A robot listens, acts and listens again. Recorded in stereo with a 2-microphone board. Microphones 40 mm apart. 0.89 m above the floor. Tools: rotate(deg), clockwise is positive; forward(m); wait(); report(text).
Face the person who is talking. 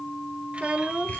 rotate(30)
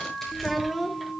report("Found it: a child speaking, straight ahead, under 1 m away.")